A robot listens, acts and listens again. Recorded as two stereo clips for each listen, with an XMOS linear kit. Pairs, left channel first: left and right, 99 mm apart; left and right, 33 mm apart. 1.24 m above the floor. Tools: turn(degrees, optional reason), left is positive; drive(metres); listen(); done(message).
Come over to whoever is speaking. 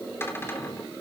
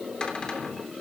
listen()
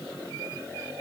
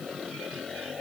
listen()
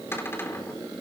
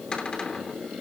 done("I can't make out anyone speaking, only a cupboard door.")